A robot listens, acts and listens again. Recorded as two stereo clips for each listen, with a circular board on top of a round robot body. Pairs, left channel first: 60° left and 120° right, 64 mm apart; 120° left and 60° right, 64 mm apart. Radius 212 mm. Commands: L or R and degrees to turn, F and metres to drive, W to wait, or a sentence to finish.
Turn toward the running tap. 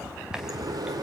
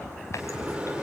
W
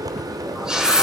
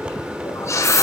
L160
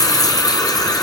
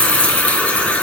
L50
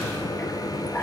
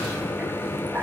W
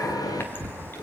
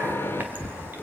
W
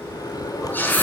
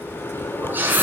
Found it: a running tap, straight ahead, 2 to 4 m away.